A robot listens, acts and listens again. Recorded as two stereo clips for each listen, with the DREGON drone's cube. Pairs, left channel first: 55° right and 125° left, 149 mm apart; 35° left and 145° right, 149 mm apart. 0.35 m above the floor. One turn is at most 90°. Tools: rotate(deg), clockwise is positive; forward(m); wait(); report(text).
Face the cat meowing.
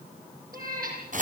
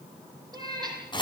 rotate(-90)
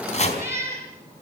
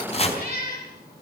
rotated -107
rotate(-50)
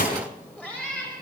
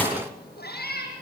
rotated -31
rotate(-25)
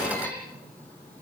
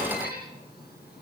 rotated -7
rotate(-20)
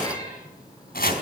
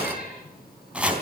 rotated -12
rotate(-10)
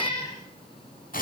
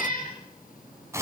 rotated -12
report("Found it: a cat meowing, straight ahead.")